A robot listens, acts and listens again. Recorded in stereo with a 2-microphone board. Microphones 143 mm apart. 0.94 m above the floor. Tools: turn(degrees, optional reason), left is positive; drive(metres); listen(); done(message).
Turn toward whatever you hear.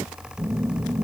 turn(degrees=-20, reason="The phone buzzing: about 20° right or 160° right.")
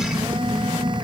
turn(degrees=-140, reason="So it is at 140° right.")
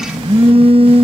turn(degrees=-50, reason="The phone buzzing is now 50° right.")
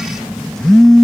done("Facing the phone buzzing.")